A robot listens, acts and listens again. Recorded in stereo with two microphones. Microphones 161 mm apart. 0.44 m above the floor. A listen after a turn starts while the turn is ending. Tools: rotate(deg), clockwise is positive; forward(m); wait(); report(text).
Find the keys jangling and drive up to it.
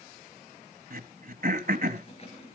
rotate(-40)
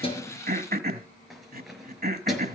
forward(1.0)
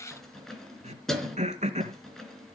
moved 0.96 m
forward(1.0)
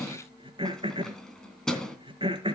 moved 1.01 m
forward(1.0)
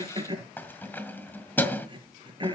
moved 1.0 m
rotate(-10)
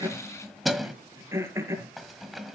forward(1.0)
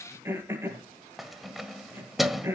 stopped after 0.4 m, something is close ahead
report("Arrived at the keys jangling, straight ahead.")